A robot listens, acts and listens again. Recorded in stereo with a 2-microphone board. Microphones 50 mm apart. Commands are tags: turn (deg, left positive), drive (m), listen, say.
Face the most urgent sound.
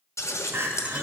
<turn deg="-60"/>
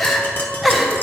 <say>Facing the crying, under 1 m away.</say>